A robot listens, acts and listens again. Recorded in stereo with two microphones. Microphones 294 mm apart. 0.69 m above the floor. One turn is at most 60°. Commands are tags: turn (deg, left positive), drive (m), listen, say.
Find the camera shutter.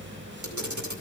<turn deg="-60"/>
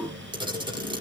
<turn deg="-15"/>
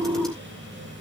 <listen/>
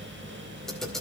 <say>Found it: a camera shutter, straight ahead.</say>